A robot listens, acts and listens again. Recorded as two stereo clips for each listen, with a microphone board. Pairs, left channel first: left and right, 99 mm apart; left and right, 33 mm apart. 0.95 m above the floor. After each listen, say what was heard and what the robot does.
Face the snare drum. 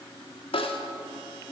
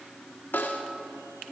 The snare drum: about 70° left or 110° left. Turn 70° left.
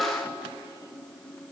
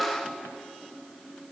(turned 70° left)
Found it: a snare drum, straight ahead.